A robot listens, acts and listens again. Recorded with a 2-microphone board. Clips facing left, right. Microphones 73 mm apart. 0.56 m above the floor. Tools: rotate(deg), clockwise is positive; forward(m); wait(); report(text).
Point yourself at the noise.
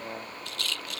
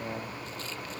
rotate(-90)
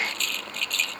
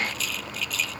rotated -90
report("Facing the rattle.")